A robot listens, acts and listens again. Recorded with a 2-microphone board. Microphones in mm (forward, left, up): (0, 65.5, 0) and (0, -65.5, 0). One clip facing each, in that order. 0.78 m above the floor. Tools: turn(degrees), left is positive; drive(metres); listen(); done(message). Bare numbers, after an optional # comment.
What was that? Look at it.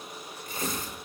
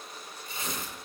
# The tearing paper: about 50° left or 130° left.
turn(50)
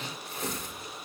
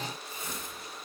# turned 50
# So it is at 80° left.
turn(80)
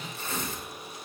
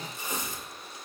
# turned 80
# The tearing paper is now 15° right.
turn(-15)
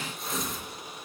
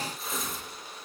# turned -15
done("Facing the tearing paper.")